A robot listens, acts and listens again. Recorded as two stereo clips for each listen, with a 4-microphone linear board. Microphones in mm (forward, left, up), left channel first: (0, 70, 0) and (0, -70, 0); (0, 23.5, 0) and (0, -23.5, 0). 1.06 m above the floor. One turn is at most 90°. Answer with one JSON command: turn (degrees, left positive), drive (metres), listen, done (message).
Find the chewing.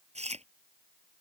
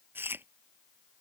{"turn": -50}
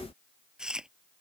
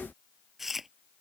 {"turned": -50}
{"done": "Found it: chewing, straight ahead."}